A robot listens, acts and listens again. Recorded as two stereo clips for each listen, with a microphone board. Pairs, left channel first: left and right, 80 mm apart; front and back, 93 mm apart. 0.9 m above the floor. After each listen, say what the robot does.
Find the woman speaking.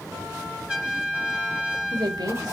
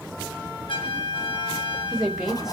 Turn 95° right.
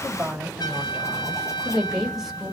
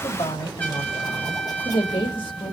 Facing the woman speaking.